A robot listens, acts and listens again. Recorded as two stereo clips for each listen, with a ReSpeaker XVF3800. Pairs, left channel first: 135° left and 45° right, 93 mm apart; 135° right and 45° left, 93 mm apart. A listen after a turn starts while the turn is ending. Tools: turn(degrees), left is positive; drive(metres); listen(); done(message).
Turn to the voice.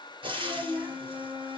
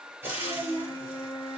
turn(degrees=20)
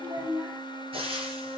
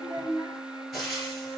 done("Facing the child speaking.")